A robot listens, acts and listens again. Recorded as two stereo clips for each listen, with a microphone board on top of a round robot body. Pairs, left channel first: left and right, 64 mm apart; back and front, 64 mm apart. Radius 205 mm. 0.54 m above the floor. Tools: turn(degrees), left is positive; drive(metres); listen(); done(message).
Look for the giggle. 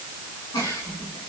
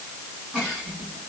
turn(degrees=80)
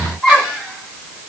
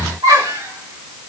done("Facing the giggle.")